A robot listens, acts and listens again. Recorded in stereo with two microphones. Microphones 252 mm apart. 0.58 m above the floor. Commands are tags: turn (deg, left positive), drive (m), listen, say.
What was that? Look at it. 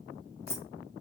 <turn deg="90"/>
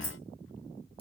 <listen/>
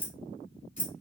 <turn deg="30"/>
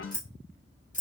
<turn deg="30"/>
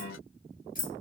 <turn deg="35"/>
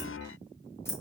<turn deg="10"/>
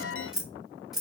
<say>Found it: keys jangling, straight ahead.</say>